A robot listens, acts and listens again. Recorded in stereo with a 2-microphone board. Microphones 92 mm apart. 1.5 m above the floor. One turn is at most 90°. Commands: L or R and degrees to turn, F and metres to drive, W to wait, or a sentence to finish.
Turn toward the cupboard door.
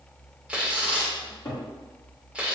L30
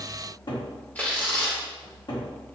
L90
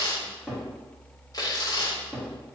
Facing the cupboard door, 1 to 2 m away.